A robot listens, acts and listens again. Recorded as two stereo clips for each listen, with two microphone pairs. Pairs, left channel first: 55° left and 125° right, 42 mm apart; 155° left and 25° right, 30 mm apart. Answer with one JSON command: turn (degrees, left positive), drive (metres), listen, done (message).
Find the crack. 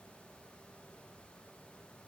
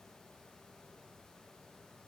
{"listen": true}
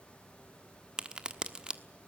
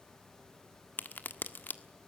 {"turn": 170}
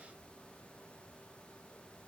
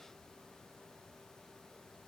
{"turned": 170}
{"done": "I heard a crack from this way, but can't make it out now."}